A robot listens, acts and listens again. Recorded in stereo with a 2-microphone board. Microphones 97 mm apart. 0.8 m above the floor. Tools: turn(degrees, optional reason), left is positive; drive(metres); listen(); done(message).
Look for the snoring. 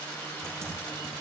listen()
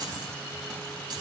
listen()
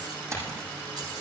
done("I can't make out snoring, only typing on a keyboard.")